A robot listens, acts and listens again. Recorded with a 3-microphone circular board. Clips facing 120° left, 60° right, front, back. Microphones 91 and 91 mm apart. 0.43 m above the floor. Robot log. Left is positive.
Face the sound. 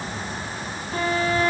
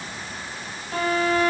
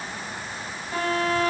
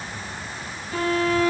note: The violin: 50° right.
cmd yaw -50
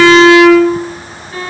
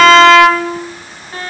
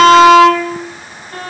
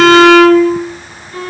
note: The violin is now 15° right.
cmd yaw -15
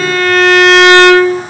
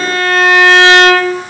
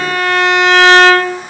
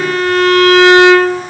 end: Facing the violin, 1 to 2 m away.